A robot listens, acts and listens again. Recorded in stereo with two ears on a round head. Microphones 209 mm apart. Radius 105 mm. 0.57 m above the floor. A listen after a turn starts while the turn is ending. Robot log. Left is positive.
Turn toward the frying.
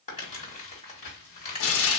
note: The frying: about 65° left or 115° left.
cmd yaw +65
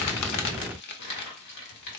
note: So it is at 50° left.
cmd yaw +50
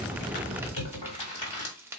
note: The frying is now 10° right.
cmd yaw -10
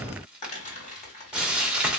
end: Facing the frying.